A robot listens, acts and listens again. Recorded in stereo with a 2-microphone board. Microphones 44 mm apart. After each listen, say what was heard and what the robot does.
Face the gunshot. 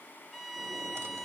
Keep listening.
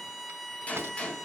The gunshot: about 30° left or 150° left. Turn 30° left.
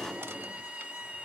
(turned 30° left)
Keep listening.
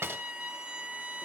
I heard a gunshot, but can't make it out now. It was about straight ahead or 120° left.